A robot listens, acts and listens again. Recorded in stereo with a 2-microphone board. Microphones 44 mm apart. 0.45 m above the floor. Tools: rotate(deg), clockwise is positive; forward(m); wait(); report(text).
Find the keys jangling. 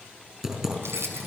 rotate(90)
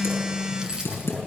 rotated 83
rotate(20)
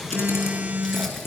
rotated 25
wait()
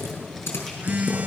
wait()
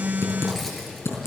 report("I heard keys jangling from this way, but can't make it out now.")